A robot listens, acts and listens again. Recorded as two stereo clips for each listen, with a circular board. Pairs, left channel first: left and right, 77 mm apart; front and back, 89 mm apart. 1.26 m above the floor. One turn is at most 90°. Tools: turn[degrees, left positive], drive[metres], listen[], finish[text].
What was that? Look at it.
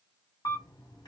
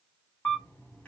Thought: The camera shutter: 70° left.
Action: turn[70]
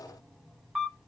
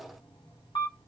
Action: finish[Facing the camera shutter, 1 to 2 m away.]